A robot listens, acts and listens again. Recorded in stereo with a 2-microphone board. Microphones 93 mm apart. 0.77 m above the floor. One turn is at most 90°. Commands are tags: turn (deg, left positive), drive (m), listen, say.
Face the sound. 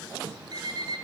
<turn deg="-50"/>
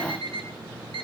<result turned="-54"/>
<turn deg="-75"/>
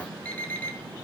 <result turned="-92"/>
<turn deg="15"/>
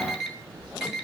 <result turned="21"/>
<say>Found it: an alarm clock, straight ahead, over 4 m away.</say>